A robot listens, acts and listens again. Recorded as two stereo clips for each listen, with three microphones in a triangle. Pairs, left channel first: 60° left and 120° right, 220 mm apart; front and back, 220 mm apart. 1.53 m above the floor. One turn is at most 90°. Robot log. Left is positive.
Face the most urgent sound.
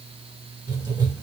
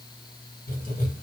cmd idle
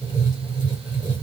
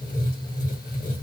cmd idle
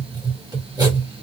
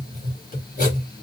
end: I can't make out anything urgent to turn to.